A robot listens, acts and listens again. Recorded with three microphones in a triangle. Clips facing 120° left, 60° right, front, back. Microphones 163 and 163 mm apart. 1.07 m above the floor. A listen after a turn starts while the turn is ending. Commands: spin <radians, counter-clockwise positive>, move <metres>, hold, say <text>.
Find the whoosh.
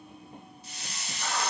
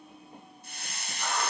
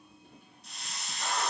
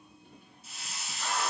hold
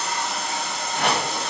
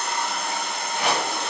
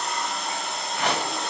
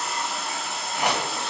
spin 1.83
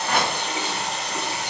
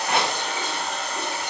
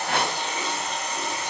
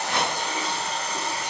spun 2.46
spin -0.61
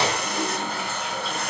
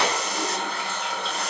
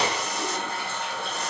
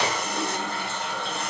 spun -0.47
hold
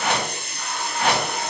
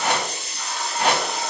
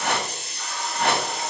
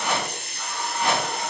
spin -0.17
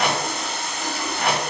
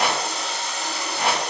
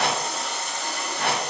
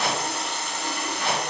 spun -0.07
say Found it: a whoosh, straight ahead, 1 to 2 m away.